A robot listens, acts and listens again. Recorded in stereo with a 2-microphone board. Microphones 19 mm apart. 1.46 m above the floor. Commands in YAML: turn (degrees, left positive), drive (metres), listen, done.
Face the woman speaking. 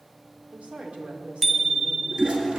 turn: -90
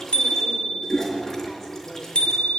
listen: true
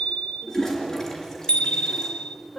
turn: 20
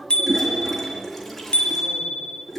done: "Facing the woman speaking, over 4 m away."